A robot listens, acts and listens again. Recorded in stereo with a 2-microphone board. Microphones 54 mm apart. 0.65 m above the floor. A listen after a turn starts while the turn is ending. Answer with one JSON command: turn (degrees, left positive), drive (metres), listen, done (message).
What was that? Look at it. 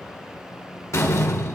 {"turn": 65}
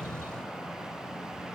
{"listen": true}
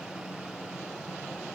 {"done": "I heard a door slam, but can't make it out now. It was about straight ahead or 50° left."}